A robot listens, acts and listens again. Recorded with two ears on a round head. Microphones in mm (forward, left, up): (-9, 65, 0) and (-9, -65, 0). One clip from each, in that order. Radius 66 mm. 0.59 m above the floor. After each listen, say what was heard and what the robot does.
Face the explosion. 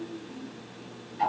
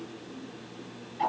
Keep listening.
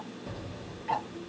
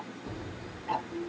The explosion: about 45° left or 135° left. Turn 45° left.
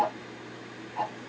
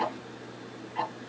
Keep listening.
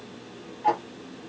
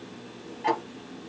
I heard an explosion, but can't make it out now. It was about straight ahead or 90° left.